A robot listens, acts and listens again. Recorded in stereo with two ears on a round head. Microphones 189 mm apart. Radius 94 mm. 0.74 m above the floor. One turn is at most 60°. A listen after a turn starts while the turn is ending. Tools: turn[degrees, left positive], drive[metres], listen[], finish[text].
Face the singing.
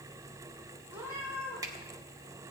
Action: listen[]
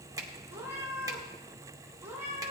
Action: listen[]
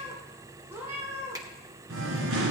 Thought: The singing: about 65° right or 115° right.
Action: turn[-60]
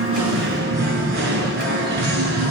Thought: So it is at 55° right.
Action: turn[-55]
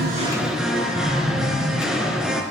Action: finish[Facing the singing.]